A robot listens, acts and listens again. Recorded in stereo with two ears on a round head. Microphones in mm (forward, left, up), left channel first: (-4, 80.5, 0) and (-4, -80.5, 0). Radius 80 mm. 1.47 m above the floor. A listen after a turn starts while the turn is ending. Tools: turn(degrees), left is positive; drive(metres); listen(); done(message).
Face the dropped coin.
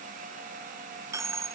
turn(degrees=-15)
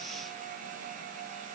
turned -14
listen()
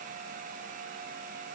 done("I heard a dropped coin, but can't make it out now. It was about straight ahead or 150° right.")